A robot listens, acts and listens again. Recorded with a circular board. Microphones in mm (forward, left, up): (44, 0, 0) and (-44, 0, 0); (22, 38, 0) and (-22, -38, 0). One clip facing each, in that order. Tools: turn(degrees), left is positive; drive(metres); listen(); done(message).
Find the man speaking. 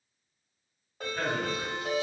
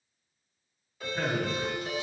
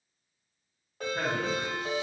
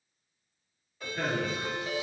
turn(degrees=105)
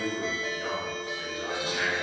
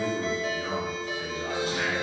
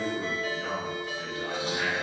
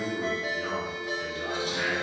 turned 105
turn(degrees=15)
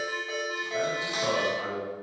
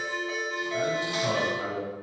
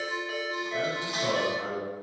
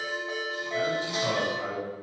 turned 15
done("Facing the man speaking, 2 to 4 m away.")